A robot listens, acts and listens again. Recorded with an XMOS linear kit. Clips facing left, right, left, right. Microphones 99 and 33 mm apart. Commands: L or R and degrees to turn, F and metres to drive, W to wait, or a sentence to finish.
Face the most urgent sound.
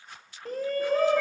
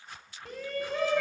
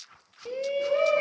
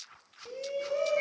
L40
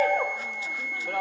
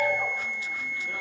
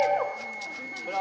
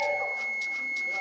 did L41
L100
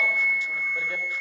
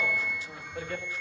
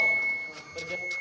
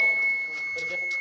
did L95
W
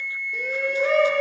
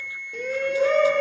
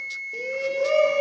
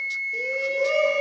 Facing the shout.